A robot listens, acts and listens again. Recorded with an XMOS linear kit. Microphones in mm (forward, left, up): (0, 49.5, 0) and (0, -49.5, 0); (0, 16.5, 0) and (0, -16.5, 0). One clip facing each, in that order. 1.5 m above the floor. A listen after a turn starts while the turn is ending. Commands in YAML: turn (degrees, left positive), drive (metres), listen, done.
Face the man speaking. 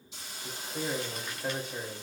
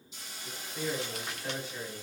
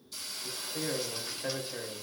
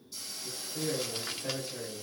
turn: 60
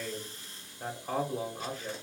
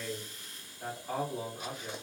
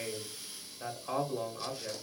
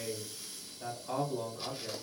turn: 60
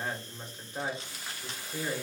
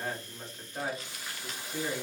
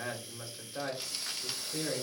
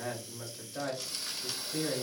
turn: 15
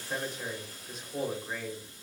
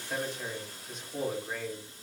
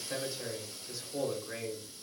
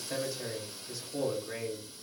done: "Facing the man speaking, 1 to 2 m away."